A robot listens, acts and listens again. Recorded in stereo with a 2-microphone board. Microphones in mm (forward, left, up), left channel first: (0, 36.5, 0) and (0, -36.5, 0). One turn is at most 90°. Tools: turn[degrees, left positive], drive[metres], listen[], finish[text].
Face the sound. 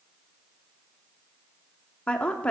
Thought: The woman speaking: about 20° left or 160° left.
Action: turn[20]
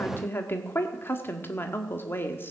Thought: So it is at 140° left.
Action: turn[90]
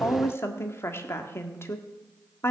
Thought: The woman speaking is now 45° left.
Action: turn[45]
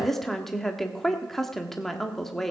Action: finish[Found it: a woman speaking, straight ahead, 1 to 2 m away.]